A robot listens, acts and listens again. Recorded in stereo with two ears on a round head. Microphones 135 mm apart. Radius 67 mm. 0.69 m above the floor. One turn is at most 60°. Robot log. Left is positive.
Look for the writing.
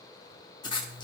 note: The writing: about 30° left or 150° left.
cmd yaw +30
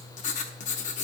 note: So it is at 120° left.
cmd yaw +60
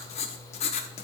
note: The writing is now 55° left.
cmd yaw +55
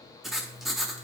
end: Found it: writing, straight ahead.